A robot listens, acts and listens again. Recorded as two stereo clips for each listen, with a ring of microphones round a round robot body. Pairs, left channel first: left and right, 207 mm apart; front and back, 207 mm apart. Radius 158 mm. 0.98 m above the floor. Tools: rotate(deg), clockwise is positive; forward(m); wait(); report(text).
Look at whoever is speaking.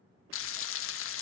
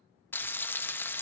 wait()
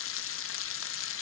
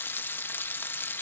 wait()
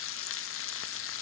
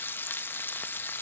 report("I can't make out anyone speaking, only frying.")